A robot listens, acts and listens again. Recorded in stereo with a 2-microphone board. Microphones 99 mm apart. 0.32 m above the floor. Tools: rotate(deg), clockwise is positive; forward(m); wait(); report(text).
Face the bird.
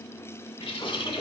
rotate(-65)
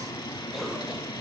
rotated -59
rotate(-50)
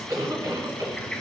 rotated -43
rotate(-10)
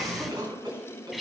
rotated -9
report("Facing the bird, under 1 m away.")